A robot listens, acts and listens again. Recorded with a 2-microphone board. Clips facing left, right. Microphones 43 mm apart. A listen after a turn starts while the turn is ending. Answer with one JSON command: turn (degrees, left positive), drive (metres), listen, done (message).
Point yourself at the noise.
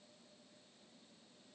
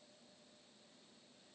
{"listen": true}
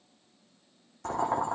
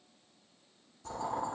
{"turn": 65}
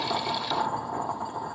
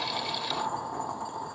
{"turn": 15}
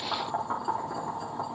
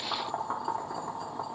{"done": "Facing the boiling."}